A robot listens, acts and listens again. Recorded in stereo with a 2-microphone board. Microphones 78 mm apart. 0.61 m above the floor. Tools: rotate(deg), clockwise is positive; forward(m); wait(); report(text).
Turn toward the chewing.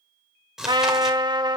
rotate(30)
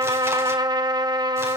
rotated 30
wait()
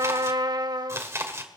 rotate(140)
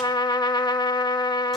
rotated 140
wait()
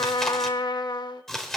report("Found it: chewing, straight ahead.")